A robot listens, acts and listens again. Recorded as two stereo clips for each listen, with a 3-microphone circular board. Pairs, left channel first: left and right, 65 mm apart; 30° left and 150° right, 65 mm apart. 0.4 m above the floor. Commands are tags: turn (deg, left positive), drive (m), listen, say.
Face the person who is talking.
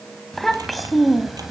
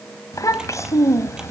<say>Facing the child speaking.</say>